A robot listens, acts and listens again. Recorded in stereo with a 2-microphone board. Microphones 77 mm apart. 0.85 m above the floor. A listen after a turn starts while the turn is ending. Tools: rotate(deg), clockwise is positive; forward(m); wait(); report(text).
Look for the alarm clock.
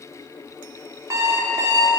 rotate(45)
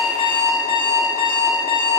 rotate(90)
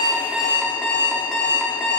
rotate(-15)
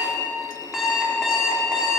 report("Facing the alarm clock, under 1 m away.")